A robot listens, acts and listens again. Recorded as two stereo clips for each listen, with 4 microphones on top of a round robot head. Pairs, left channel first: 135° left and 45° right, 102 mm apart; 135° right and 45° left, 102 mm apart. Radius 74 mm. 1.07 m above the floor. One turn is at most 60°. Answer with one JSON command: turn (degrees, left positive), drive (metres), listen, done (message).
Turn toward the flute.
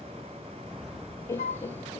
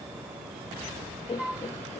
{"turn": 60}
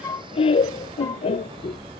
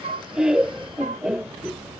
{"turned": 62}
{"turn": 60}
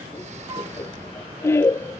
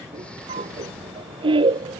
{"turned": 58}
{"turn": 10}
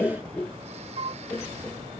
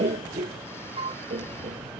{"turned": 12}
{"done": "Facing the flute."}